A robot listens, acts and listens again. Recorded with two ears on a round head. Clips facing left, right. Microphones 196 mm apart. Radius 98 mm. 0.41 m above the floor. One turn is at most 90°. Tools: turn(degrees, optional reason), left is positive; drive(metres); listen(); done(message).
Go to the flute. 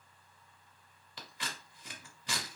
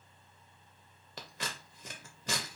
listen()
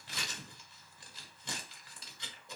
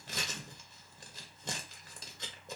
listen()
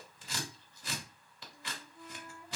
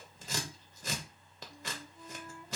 turn(degrees=20, reason="The flute: about 20° left or 160° left.")
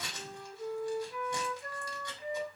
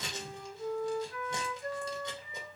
drive(metres=1.0)
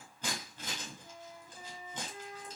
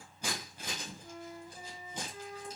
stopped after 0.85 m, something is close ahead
done("Arrived at the flute, straight ahead.")